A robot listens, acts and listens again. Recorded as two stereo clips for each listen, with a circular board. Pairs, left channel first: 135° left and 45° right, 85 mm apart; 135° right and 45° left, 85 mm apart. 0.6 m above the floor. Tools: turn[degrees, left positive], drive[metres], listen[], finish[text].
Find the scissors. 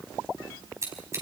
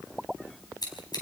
Thought: The scissors: 100° right.
Action: turn[-100]
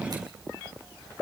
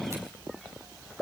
Action: listen[]
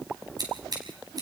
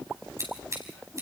Action: finish[Facing the scissors, over 4 m away.]